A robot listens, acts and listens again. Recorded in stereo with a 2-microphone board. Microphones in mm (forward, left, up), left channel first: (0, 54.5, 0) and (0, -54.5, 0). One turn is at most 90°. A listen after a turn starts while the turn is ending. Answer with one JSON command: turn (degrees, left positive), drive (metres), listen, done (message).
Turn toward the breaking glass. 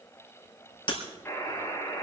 {"turn": 50}
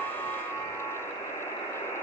{"listen": true}
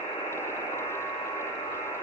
{"done": "I heard breaking glass, but can't make it out now. It was about straight ahead or 80° left."}